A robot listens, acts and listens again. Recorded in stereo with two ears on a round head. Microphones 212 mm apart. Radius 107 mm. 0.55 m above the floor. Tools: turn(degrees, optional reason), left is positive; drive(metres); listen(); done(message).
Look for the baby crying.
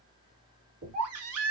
turn(degrees=-70, reason="The baby crying: about 70° right or 110° right.")
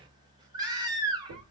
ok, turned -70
turn(degrees=-20, reason="So it is at 20° right.")
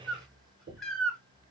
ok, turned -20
done("Facing the baby crying, 1 to 2 m away.")